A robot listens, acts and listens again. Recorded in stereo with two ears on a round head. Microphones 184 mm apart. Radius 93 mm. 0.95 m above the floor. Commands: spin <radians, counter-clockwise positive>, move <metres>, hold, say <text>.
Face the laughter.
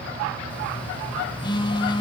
hold
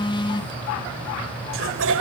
spin -1.22
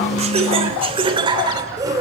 spin -0.26
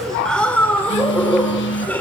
say Found it: laughter, straight ahead.